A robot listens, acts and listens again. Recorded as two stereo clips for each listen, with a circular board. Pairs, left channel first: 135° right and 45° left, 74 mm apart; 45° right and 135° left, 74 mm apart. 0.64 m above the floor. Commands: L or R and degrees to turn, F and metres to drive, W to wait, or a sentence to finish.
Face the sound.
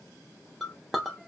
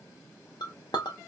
R45
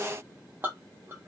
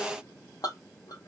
R15
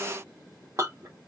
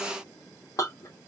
Found it: a clink, straight ahead, under 1 m away.